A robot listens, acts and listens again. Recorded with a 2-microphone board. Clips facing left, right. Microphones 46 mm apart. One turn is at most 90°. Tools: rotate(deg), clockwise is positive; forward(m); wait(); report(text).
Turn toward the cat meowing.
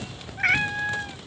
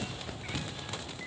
rotate(-90)
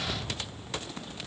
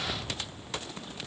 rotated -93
wait()
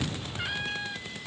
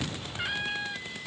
report("Found it: a cat meowing, straight ahead.")